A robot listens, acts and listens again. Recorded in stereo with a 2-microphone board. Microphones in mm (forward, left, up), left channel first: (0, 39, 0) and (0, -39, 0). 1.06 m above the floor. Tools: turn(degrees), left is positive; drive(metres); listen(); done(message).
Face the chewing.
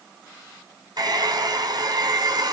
listen()
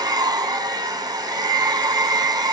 listen()
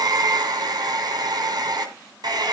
done("I can't make out chewing, only a hair dryer.")